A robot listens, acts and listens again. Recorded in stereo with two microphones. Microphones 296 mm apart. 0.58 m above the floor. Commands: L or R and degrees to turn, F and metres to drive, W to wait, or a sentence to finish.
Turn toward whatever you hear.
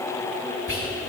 R45
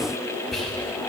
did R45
Facing the whispering, 2 to 4 m away.